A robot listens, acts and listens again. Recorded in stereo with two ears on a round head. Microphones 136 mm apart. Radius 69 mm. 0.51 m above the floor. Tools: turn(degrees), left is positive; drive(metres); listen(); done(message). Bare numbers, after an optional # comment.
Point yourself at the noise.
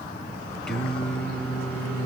turn(30)
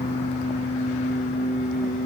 # So it is at 125° left.
turn(125)
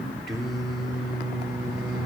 done("Found it: singing, straight ahead.")